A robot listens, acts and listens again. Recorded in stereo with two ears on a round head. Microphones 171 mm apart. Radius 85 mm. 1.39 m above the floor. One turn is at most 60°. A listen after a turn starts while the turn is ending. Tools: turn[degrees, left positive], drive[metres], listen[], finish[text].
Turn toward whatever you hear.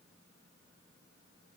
Action: listen[]
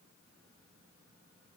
Action: listen[]
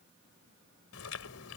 Action: turn[60]
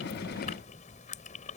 Thought: So it is at 40° left.
Action: turn[40]
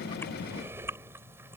Thought: The chewing is now 10° right.
Action: turn[-10]
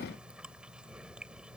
Action: finish[Facing the chewing.]